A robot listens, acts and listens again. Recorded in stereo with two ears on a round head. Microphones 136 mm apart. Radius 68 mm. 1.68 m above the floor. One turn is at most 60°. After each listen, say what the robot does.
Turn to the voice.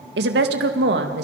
Turn 60° right.
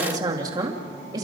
Turn 25° right.
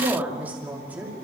Turn 10° right.
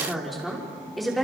Found it: a woman speaking, straight ahead.